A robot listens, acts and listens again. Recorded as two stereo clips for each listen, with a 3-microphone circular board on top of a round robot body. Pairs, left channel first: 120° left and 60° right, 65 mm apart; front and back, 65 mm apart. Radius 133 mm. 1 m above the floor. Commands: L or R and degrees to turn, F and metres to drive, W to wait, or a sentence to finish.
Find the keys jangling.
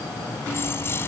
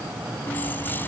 L65
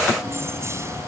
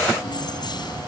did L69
R10
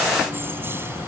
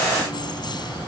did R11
Facing the keys jangling.